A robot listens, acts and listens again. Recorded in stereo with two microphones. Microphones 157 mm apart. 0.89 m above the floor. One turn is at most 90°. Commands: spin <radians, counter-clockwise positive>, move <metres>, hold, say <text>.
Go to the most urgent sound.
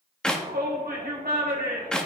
spin -1.57
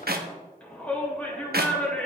spin 0.17
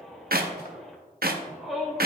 move 1.0
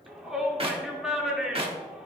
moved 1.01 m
move 1.0
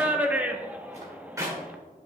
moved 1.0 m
spin -0.17
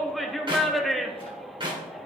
move 1.0
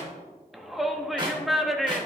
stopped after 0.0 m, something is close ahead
say Arrived at the shout, straight ahead.